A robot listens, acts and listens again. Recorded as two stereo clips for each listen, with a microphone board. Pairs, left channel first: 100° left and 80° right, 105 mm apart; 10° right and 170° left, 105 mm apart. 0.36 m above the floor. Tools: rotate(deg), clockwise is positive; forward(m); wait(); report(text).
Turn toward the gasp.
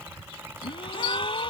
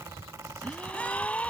rotate(-65)
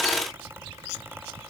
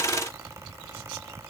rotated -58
report("I heard a gasp from this way, but can't make it out now.")